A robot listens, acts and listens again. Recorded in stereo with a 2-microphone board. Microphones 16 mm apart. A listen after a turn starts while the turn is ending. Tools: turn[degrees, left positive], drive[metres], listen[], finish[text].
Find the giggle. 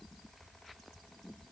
Action: listen[]
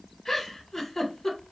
Thought: The giggle: about 30° left or 150° left.
Action: turn[30]
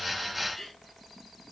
Thought: So it is at 120° left.
Action: turn[120]
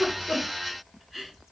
Action: finish[Found it: a giggle, straight ahead.]